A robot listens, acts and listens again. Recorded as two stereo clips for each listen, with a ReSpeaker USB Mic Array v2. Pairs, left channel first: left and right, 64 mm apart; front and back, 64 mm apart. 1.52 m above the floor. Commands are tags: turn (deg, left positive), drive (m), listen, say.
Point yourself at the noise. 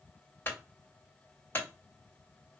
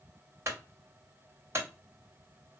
<turn deg="140"/>
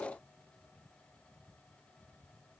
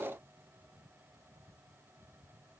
<say>I heard a clunk from this way, but can't make it out now.</say>